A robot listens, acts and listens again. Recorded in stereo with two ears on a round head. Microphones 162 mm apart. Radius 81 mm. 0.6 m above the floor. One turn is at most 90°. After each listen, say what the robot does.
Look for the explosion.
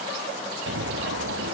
Turn 70° right.
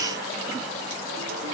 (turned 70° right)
Keep listening.
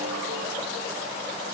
I heard an explosion, but can't make it out now. It was about straight ahead or 40° right.